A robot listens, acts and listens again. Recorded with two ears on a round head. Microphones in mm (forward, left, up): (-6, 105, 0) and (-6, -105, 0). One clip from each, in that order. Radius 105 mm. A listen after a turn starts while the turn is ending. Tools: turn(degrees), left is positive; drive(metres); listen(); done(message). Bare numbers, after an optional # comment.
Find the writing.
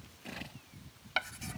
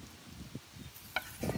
# The writing: about 20° left or 160° left.
turn(20)
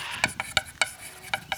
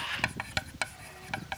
# So it is at 140° left.
turn(140)
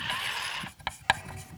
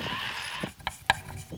done("Found it: writing, straight ahead.")